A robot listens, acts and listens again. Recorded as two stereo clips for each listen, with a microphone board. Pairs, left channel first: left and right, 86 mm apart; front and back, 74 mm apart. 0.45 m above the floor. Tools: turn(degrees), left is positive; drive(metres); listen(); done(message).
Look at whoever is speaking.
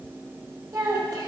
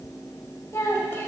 turn(degrees=-55)
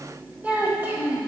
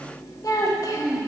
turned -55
turn(degrees=-25)
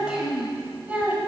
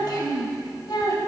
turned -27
turn(degrees=-20)
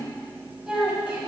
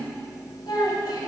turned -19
turn(degrees=-15)
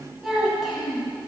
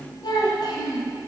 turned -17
done("Facing the child speaking.")